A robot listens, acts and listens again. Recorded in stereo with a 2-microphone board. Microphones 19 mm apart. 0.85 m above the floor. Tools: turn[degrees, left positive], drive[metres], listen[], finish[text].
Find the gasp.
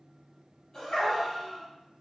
Thought: The gasp: about 35° left or 145° left.
Action: turn[35]
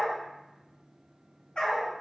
Action: listen[]
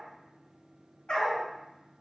Action: finish[I heard a gasp, but can't make it out now. It was about straight ahead or 110° left.]